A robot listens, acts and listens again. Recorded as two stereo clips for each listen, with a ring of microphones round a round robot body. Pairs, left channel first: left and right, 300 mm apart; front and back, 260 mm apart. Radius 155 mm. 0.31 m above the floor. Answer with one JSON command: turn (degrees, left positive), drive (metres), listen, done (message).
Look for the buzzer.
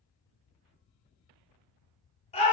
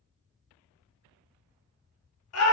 {"listen": true}
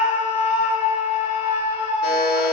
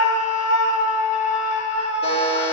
{"turn": 65}
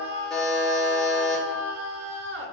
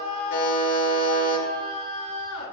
{"done": "Facing the buzzer, 2 to 4 m away."}